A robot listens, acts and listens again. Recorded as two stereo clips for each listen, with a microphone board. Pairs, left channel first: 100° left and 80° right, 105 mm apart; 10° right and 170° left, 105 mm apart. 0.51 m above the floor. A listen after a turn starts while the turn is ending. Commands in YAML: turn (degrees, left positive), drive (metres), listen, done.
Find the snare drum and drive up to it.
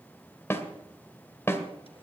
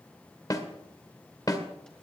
turn: 40
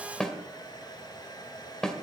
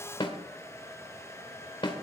turn: 15
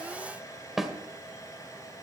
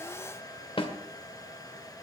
drive: 1.0
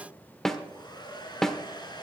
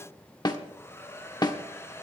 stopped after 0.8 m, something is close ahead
turn: 15
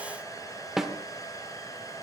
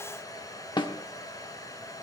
done: "Arrived at the snare drum, straight ahead."